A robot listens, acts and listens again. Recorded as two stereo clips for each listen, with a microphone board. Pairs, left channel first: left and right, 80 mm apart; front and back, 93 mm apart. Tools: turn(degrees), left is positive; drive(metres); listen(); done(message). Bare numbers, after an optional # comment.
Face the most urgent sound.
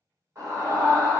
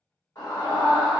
# The scream: 45° right.
turn(-45)
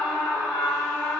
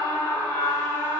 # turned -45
done("Found it: a scream, straight ahead.")